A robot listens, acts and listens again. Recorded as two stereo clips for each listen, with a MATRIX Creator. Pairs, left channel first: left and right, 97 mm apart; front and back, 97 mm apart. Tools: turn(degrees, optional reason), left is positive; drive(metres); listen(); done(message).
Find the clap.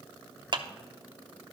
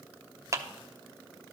turn(degrees=-125, reason="The clap: 125° right.")
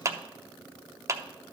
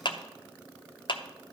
turn(degrees=-30, reason="The clap is now 30° right.")
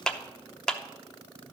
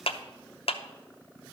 done("Found it: a clap, straight ahead, under 1 m away.")